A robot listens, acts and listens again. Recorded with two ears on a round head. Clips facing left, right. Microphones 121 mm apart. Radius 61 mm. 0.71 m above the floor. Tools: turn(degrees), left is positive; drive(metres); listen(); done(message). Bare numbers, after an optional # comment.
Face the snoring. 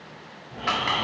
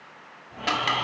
# The snoring: about 40° left or 140° left.
turn(40)
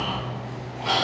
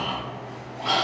done("Facing the snoring, 2 to 4 m away.")